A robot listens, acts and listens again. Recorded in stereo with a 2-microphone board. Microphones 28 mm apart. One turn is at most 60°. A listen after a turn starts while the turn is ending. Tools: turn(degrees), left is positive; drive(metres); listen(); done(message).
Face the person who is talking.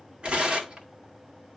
listen()
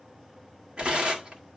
listen()
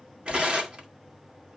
done("I can't make out anyone speaking, only tearing paper.")